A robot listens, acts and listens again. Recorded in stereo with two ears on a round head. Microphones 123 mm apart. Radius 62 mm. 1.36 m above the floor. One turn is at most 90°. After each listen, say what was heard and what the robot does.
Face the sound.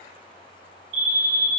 The fire alarm: about 60° right or 120° right. Turn 60° right.
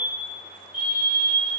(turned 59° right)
Found it: a fire alarm, straight ahead.